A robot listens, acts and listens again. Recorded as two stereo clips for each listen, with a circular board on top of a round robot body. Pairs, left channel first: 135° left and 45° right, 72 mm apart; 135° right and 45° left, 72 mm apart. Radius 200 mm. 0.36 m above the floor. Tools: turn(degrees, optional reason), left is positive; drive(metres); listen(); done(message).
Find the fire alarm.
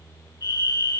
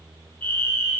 turn(degrees=160, reason="The fire alarm: 160° left.")
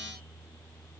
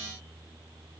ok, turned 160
listen()
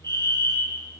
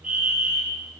turn(degrees=-30, reason="The fire alarm is now 30° right.")
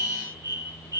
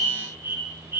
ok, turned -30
turn(degrees=-15, reason="The fire alarm is now 15° right.")
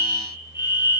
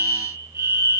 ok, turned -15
done("Facing the fire alarm.")